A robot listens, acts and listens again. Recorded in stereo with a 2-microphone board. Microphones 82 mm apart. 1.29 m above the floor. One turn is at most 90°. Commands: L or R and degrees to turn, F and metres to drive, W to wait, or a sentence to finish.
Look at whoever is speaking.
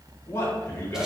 L25
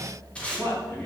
L25
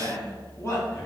L30
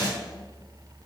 W
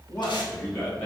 L35
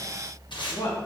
L90
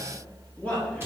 L10
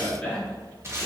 Found it: a man speaking, straight ahead.